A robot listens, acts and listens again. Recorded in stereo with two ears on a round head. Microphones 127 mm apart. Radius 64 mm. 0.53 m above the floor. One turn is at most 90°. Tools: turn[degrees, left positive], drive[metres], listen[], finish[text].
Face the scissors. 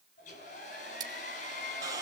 Thought: The scissors: about 30° right or 150° right.
Action: turn[-30]
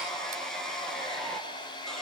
Action: listen[]
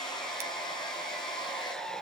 Action: listen[]
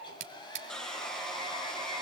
Thought: So it is at 120° right.
Action: turn[-90]
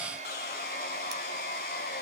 Thought: Nothing new. It was at 30° right.
Action: turn[-30]
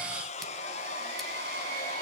Action: listen[]
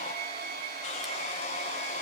Action: finish[I heard scissors from this way, but can't make it out now.]